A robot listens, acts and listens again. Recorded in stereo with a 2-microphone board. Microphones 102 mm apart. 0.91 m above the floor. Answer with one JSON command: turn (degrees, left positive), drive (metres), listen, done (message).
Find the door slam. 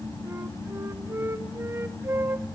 {"listen": true}
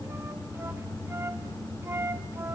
{"listen": true}
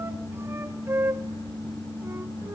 {"done": "I can't make out a door slam, only a flute."}